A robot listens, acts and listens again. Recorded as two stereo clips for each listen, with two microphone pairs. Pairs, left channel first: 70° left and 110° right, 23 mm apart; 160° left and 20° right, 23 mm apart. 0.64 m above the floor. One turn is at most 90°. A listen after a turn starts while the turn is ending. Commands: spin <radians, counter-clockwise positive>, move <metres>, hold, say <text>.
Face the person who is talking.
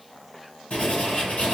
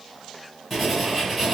hold
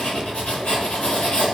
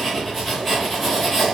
hold
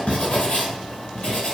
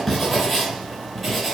say I can't make out anyone speaking to turn to.